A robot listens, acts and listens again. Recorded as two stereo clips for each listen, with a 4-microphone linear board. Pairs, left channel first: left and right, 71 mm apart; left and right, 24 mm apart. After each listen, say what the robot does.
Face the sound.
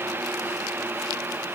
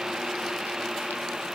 Keep listening.
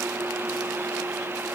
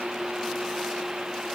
Keep listening.
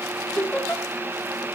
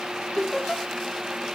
Turn 30° left.
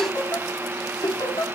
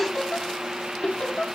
Turn 115° left.
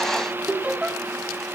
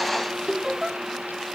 Turn 20° right.
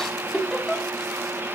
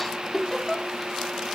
Facing the laughter, 2 to 4 m away.